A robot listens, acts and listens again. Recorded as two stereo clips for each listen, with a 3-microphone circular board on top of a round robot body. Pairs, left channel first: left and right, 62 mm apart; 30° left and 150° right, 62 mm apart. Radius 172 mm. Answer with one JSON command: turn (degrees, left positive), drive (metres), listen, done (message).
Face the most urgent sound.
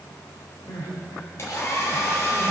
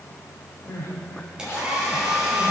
{"turn": 75}
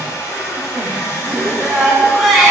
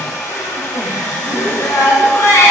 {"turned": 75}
{"done": "Found it: crying, straight ahead."}